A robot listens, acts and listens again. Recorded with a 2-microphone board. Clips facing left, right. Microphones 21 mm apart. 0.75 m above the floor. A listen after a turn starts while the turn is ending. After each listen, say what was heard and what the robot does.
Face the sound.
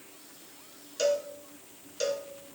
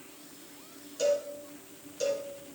The cowbell: about 30° left or 150° left. Turn 30° left.
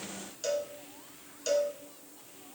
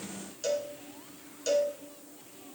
Facing the cowbell, 2 to 4 m away.